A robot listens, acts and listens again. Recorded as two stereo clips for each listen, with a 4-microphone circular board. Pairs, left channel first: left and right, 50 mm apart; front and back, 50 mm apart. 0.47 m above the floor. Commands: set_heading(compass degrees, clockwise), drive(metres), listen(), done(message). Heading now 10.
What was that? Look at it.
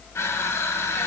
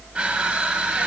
set_heading(260)
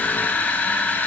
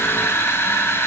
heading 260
set_heading(225)
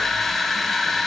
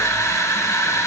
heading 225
done("Found it: crushing, straight ahead.")